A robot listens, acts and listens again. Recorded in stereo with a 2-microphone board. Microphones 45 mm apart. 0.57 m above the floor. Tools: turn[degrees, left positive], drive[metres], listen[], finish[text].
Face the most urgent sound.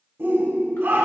Thought: The shout: about 50° right or 130° right.
Action: turn[-50]
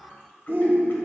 Thought: So it is at 60° right.
Action: turn[-60]
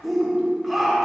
Action: finish[Facing the shout.]